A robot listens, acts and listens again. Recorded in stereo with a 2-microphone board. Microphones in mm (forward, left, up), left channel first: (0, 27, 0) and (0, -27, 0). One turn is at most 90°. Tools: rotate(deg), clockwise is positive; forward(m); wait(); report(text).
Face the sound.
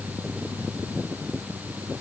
wait()
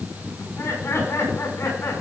rotate(-65)
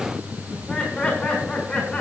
rotate(-15)
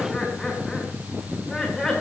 report("Found it: laughter, straight ahead, over 4 m away.")